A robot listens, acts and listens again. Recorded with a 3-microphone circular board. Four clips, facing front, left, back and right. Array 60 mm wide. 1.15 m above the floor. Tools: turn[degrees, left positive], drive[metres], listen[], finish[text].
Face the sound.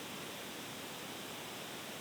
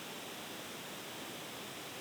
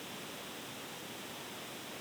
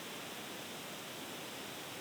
Action: listen[]
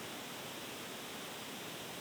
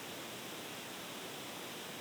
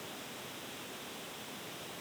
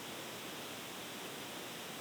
Action: listen[]
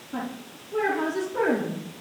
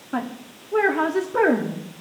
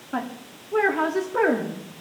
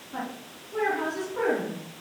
Thought: The woman speaking: 120° left.
Action: turn[120]
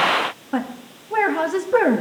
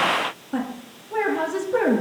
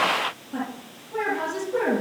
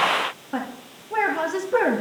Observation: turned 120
Thought: The woman speaking is now 15° right.
Action: turn[-15]
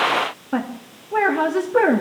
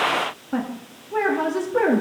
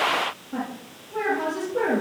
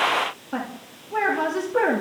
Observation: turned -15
Action: finish[Facing the woman speaking, 2 to 4 m away.]